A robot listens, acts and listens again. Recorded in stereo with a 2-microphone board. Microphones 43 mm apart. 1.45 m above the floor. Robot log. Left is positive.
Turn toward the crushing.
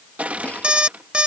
note: The crushing: about 35° right or 145° right.
cmd yaw -35
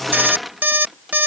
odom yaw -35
end: Facing the crushing.